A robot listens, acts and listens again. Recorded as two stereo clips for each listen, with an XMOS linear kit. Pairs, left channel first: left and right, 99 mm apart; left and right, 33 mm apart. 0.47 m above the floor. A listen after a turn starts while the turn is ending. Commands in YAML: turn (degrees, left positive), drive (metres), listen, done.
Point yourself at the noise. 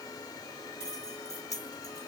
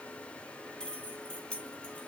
turn: 30
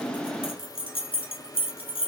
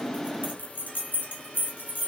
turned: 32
turn: 115
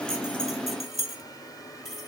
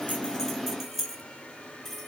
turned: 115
done: "Facing the keys jangling."